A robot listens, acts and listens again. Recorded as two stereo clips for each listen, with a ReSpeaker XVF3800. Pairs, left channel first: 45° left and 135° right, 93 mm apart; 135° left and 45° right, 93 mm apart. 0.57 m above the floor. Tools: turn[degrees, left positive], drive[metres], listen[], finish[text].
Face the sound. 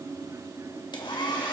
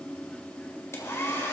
Thought: The hair dryer: 75° left.
Action: turn[75]
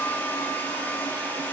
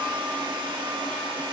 Thought: The hair dryer is now 20° right.
Action: turn[-20]
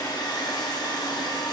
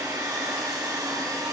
Action: finish[Facing the hair dryer, 1 to 2 m away.]